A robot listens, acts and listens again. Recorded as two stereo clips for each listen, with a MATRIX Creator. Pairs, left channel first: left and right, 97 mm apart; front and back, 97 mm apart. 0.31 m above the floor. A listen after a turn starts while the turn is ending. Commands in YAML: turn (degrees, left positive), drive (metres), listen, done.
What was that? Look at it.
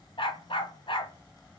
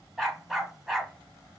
turn: 95
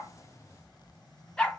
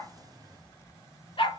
turn: 15
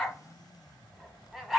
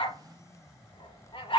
done: "Facing the dog barking."